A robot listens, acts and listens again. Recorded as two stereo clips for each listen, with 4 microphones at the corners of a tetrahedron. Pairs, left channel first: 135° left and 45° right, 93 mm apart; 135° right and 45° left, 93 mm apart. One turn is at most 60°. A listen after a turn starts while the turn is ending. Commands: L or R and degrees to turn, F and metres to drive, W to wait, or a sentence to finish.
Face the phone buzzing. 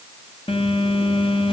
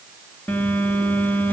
L60
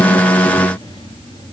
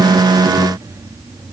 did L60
L60
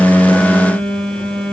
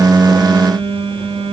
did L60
L50
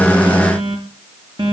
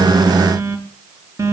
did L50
R10
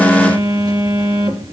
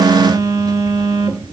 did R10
Facing the phone buzzing, 2 to 4 m away.